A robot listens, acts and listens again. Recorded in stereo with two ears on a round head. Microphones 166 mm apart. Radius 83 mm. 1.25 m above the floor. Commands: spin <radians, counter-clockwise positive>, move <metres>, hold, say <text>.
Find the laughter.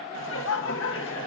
spin 1.31
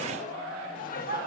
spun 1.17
spin 0.87
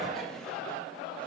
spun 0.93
hold
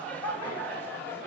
spin 0.17
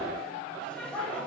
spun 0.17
say Facing the laughter.